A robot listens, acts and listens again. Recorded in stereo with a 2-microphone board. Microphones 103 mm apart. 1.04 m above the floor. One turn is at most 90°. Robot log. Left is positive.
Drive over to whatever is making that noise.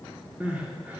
note: The crying: about 15° right or 165° right.
cmd yaw -15
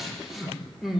cmd fwd 1.0
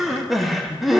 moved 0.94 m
cmd fwd 1.0
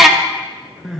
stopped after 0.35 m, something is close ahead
end: Arrived at the crying, straight ahead.